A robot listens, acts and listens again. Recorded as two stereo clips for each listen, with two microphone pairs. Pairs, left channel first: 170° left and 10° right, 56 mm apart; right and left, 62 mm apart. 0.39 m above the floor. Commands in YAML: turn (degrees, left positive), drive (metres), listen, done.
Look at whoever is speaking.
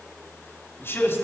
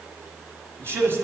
turn: 135
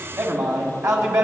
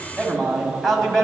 done: "Found it: a man speaking, straight ahead, 1 to 2 m away."